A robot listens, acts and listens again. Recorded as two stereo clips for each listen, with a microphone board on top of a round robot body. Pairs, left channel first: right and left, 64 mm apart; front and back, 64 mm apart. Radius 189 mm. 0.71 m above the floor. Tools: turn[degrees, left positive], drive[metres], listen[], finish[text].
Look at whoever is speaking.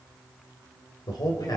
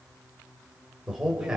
Thought: The man speaking: 100° right.
Action: turn[-100]
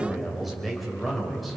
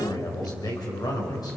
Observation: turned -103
Action: finish[Facing the man speaking.]